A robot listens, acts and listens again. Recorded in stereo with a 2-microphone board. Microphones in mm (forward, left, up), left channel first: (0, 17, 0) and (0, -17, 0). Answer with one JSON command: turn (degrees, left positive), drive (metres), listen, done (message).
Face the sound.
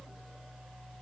{"listen": true}
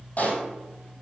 {"turn": 45}
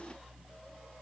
{"listen": true}
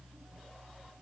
{"done": "I heard a pop, but can't make it out now. It was about straight ahead or 90° left."}